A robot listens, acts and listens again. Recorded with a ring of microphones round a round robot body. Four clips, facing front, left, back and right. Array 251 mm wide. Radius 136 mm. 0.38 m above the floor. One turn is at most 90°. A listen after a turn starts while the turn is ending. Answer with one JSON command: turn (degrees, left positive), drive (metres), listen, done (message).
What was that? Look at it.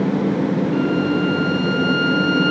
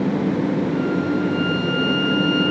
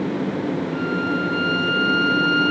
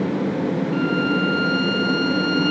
{"turn": -65}
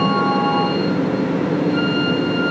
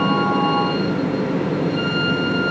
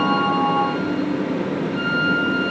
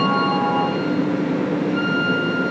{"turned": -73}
{"turn": 10}
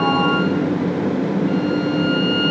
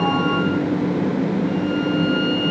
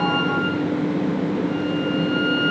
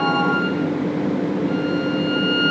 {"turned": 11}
{"done": "Facing the violin."}